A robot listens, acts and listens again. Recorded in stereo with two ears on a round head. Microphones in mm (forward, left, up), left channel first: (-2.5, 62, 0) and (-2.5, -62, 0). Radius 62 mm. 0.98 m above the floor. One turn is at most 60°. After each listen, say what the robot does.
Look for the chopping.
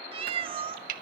Turn 60° right.
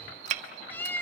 Turn 55° right.
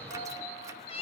Keep listening.
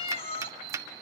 Turn 20° right.
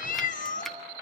Found it: chopping, straight ahead.